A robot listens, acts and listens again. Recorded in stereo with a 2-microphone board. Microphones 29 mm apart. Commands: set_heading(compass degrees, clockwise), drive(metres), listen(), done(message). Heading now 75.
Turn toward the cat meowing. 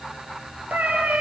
set_heading(165)
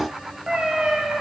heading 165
set_heading(210)
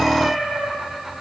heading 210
set_heading(230)
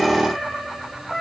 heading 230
set_heading(245)
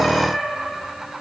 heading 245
done("Found it: a cat meowing, straight ahead.")